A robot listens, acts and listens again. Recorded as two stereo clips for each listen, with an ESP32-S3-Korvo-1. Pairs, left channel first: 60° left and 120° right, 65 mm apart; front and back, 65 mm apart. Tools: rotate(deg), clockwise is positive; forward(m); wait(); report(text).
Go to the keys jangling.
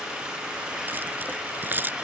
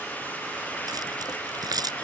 rotate(-180)
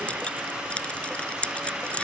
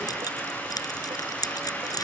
rotate(10)
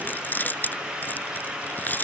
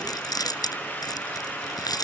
forward(1.0)
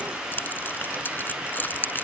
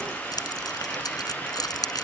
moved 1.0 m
forward(1.0)
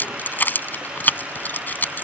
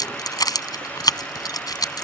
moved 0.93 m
forward(1.0)
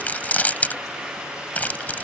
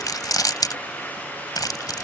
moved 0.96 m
forward(1.0)
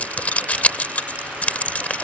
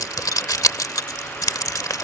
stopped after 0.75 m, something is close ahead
report("Arrived at the keys jangling, straight ahead.")